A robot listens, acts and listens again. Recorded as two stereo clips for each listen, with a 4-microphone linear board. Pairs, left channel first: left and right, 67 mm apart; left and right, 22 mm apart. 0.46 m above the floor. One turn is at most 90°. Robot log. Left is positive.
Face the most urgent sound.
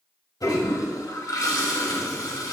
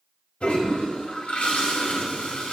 cmd idle
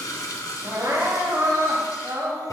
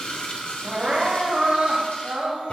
note: The crying: about 55° right or 125° right.
cmd yaw -55
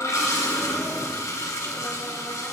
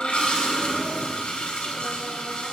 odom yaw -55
cmd idle
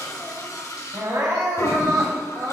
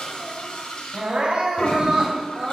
note: So it is at 60° right.
cmd yaw -60
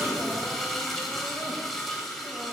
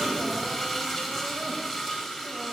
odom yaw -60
cmd idle
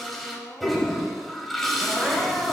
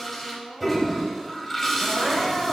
note: The crying is now 10° right.
cmd yaw -10
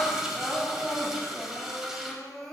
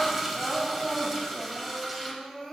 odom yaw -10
end: Facing the crying.